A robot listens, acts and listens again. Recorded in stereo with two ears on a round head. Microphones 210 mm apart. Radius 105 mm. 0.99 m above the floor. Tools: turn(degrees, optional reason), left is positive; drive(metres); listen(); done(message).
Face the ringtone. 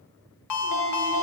turn(degrees=90)
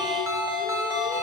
turn(degrees=-10, reason="So it is at 10° right.")
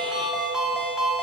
done("Facing the ringtone, 1 to 2 m away.")